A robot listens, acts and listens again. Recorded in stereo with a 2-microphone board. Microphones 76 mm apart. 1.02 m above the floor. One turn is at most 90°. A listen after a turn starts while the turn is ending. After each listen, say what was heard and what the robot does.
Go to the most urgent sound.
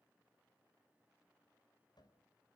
Keep listening.
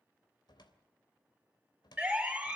Turn 30° right.
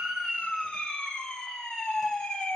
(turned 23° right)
So it is at 10° left. Turn 10° left.
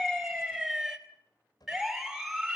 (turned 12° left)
Drive 1.0 m forward.
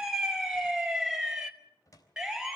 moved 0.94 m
Drive 1.0 m forward.
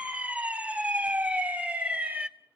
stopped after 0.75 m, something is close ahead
The siren is now 20° right. Turn 20° right.
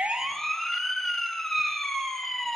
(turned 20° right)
I am next to the siren.